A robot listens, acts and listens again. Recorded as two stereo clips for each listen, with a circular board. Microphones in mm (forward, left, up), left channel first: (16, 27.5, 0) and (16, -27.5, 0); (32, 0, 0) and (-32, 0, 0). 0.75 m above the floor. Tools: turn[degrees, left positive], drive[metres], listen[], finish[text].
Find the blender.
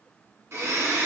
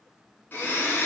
Thought: The blender: 60° right.
Action: turn[-60]
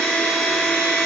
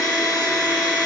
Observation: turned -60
Action: finish[Found it: a blender, straight ahead, 2 to 4 m away.]